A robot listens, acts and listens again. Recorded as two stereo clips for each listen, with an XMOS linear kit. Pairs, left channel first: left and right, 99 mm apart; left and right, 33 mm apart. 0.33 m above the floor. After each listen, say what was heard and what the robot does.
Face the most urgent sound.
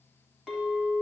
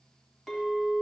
Keep listening.
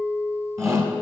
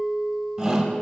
The shout: about 30° right or 150° right. Turn 30° right.
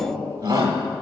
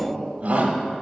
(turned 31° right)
So it is at 115° right. Turn 115° right.
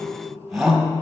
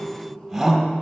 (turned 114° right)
Facing the shout, 1 to 2 m away.